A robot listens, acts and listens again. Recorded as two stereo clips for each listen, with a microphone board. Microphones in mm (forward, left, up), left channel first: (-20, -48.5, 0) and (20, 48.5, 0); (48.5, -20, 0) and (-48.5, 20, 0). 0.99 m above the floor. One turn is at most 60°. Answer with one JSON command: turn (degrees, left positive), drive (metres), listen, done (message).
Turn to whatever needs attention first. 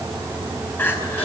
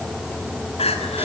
{"turn": -40}
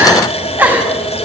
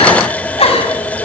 {"done": "Found it: crying, straight ahead."}